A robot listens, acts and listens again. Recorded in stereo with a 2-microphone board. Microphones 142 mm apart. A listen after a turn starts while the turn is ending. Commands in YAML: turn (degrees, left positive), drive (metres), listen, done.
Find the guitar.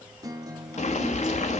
turn: -25
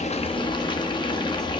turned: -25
listen: true
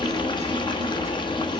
listen: true
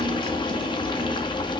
done: "I heard a guitar, but can't make it out now. It was about straight ahead or 130° right."